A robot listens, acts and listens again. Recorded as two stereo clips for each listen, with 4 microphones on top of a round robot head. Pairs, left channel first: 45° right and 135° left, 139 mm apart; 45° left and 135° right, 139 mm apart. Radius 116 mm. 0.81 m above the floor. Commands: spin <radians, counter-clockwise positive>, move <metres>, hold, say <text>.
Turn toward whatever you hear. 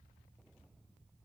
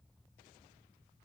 hold
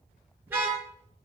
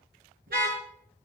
spin -2.53
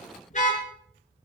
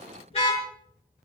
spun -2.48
say Found it: a car horn, straight ahead, over 4 m away.